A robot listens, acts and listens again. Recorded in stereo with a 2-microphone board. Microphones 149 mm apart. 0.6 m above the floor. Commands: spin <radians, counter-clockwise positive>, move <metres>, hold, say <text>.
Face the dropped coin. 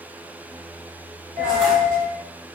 spin -1.13
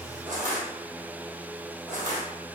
hold
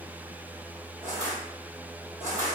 say I heard a dropped coin, but can't make it out now. It was about straight ahead or 50° right.